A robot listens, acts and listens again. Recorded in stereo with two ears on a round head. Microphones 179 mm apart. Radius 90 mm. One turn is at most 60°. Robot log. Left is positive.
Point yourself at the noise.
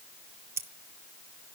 cmd yaw -30
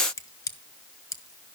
note: So it is at 15° left.
cmd yaw +15
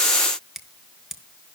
end: Found it: scissors, straight ahead, 1 to 2 m away.